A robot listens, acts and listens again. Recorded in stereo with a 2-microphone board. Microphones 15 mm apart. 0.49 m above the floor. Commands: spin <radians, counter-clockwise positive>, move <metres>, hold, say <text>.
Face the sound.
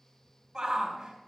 spin -0.61
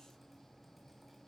hold
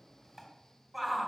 say Facing the shout.